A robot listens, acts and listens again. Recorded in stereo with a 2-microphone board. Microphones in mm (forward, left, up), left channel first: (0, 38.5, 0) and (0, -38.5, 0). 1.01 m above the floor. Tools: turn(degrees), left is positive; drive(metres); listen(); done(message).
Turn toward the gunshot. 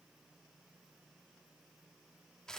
listen()
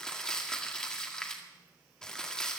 listen()
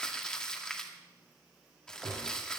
turn(degrees=-30)
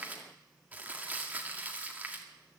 listen()
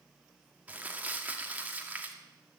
done("I heard a gunshot, but can't make it out now. It was about 20° left or 140° right.")